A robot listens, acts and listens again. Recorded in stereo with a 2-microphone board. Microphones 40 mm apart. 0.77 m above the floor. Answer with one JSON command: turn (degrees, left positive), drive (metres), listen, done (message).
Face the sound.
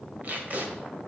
{"turn": -40}
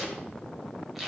{"done": "Found it: tape being pulled, straight ahead."}